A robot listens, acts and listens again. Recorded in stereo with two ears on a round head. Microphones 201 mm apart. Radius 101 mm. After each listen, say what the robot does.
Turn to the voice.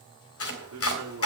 Turn 65° right.
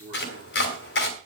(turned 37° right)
Turn 25° right.
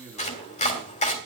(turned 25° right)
Facing the man speaking, over 4 m away.